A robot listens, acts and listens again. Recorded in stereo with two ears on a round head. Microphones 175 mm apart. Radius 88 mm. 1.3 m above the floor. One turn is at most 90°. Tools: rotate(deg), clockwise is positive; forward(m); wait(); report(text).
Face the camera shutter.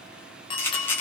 rotate(-30)
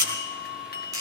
rotate(20)
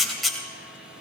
report("Facing the camera shutter.")